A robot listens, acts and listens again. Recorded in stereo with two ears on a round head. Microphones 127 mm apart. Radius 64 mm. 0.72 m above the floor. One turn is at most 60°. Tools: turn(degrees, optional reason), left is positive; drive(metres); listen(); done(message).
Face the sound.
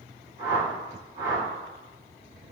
turn(degrees=-50, reason="The whoosh: about 50° right or 130° right.")
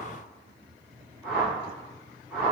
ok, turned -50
turn(degrees=-15, reason="So it is at 15° right.")
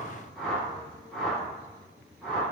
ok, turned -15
done("Found it: a whoosh, straight ahead.")